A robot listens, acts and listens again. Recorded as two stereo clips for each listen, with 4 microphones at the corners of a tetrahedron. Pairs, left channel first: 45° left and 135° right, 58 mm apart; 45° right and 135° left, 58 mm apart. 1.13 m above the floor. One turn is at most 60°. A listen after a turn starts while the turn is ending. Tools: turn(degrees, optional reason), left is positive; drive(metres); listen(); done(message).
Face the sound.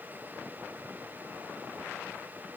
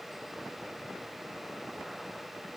listen()
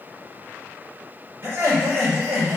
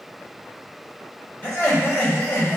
turn(degrees=-60, reason="The laughter: 105° right.")
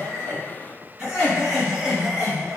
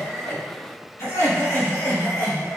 turn(degrees=-50, reason="The laughter is now 50° right.")
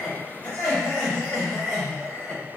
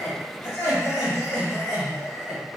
turn(degrees=-10, reason="The laughter is now 10° right.")
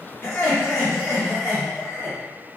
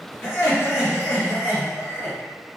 done("Facing the laughter.")